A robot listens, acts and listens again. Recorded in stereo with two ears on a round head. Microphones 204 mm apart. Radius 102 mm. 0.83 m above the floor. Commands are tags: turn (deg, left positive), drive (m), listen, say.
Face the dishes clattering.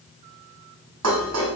<turn deg="-90"/>
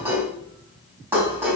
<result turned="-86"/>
<turn deg="-10"/>
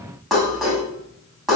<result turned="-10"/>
<say>Facing the dishes clattering.</say>